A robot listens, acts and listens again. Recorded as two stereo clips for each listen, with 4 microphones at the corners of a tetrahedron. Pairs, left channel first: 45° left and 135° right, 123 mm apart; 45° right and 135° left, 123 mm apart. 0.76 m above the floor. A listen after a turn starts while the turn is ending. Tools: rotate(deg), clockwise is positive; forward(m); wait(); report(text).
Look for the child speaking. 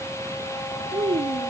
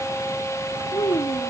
rotate(95)
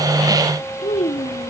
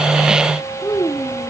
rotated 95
rotate(-25)
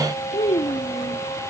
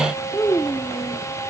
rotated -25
rotate(-25)
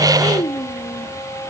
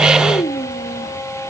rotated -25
report("Found it: a child speaking, straight ahead.")